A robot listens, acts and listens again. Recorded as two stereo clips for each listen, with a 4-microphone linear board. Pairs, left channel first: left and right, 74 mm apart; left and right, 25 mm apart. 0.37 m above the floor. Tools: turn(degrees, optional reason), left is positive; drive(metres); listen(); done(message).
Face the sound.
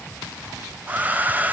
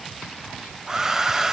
turn(degrees=-20, reason="The hair dryer: about 20° right or 160° right.")
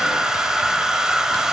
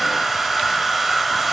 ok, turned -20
turn(degrees=-10, reason="So it is at 10° right.")
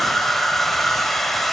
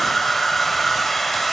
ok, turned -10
done("Facing the hair dryer.")